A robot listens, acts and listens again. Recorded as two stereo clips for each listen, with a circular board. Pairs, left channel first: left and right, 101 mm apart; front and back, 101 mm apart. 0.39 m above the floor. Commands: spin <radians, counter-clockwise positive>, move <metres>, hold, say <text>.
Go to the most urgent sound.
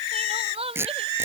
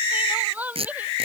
spin -1.83
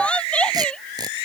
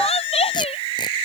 spin 0.17
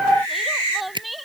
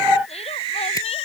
hold
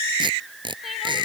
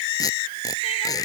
hold
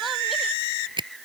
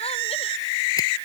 say I heard crying from this way, but can't make it out now. I did not reach it.